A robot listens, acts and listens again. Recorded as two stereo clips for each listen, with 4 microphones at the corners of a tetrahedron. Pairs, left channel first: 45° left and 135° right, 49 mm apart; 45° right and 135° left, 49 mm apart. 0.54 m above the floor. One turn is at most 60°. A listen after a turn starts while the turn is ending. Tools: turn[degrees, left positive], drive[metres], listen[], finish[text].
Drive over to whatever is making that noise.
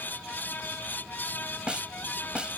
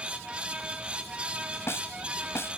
Thought: The snare drum: 65° right.
Action: turn[-60]
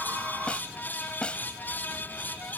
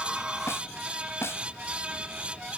Thought: The snare drum is now 20° right.
Action: turn[-20]
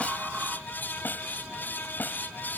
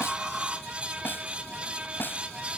Action: drive[1.0]
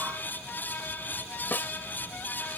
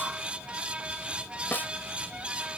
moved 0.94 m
Action: drive[1.0]
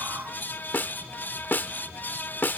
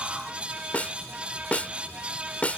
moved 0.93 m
Thought: The snare drum is now 10° left.
Action: turn[10]
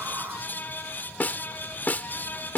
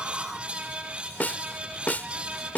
Action: drive[1.0]
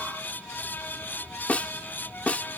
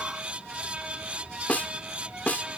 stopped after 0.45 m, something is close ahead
Action: finish[I am next to the snare drum.]